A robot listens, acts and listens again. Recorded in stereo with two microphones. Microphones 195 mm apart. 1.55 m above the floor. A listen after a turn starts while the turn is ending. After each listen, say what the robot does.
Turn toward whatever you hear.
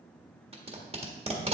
Turn 30° right.
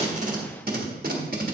Turn 110° right.
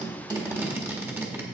Turn 15° right.
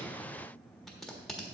Facing the tape being pulled, 1 to 2 m away.